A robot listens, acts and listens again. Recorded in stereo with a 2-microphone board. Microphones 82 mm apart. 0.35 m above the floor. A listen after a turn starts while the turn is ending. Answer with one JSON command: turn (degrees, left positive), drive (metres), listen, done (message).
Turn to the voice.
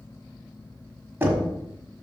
{"listen": true}
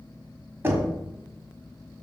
{"listen": true}
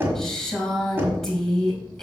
{"turn": 30}
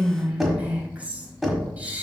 {"turn": -20}
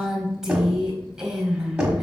{"turn": -10}
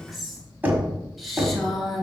{"done": "Facing the woman speaking, 2 to 4 m away."}